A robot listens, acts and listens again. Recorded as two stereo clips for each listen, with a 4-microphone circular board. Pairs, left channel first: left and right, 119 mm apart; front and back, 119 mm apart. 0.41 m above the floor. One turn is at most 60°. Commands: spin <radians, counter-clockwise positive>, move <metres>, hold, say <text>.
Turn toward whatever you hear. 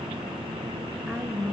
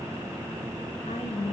say Found it: a woman speaking, straight ahead, over 4 m away.